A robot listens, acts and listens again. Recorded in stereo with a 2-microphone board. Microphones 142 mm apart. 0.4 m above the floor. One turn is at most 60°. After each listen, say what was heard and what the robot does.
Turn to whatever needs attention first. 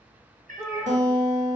The shout: about 20° right or 160° right. Turn 20° right.
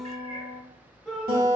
Found it: a shout, straight ahead, 1 to 2 m away.